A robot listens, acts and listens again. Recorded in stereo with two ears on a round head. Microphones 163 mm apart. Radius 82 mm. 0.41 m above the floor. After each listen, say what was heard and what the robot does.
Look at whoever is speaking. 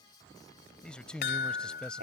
Turn 30° left.
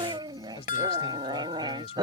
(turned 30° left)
So it is at 145° left. Turn 145° left.
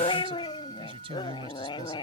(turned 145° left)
The man speaking is now 35° right. Turn 35° right.
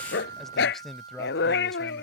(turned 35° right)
Facing the man speaking.